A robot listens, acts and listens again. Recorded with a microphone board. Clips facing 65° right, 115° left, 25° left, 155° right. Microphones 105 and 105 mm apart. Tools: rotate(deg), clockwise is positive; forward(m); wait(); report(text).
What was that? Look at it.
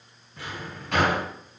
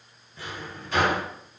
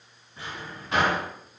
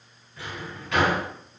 rotate(40)
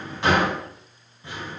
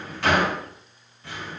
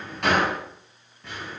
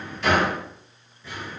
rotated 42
report("Facing the drawer.")